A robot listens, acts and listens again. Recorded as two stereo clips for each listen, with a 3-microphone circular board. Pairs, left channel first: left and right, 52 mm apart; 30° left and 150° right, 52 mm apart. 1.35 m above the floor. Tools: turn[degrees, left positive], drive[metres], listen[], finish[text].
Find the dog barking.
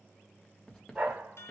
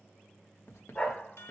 Thought: The dog barking: 35° right.
Action: turn[-35]
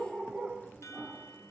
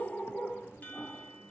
Thought: The dog barking is now 45° right.
Action: turn[-45]
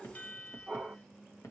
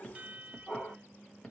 Thought: The dog barking is now 30° right.
Action: turn[-30]
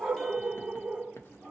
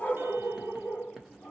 Thought: The dog barking is now 25° right.
Action: turn[-25]
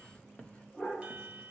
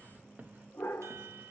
Thought: The dog barking is now 10° left.
Action: turn[10]
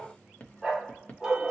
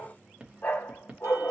Action: finish[Found it: a dog barking, straight ahead.]